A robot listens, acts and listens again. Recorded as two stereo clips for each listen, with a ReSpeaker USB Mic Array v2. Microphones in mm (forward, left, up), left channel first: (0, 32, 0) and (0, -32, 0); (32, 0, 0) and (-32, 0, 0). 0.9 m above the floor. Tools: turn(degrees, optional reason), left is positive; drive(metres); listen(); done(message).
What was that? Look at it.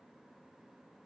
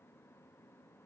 listen()
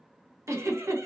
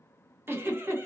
turn(degrees=-130, reason="The giggle: 130° right.")
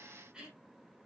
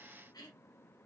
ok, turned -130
listen()
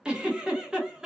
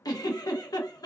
turn(degrees=-15, reason="The giggle is now 15° right.")
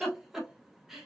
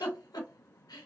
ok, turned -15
done("Found it: a giggle, straight ahead, under 1 m away.")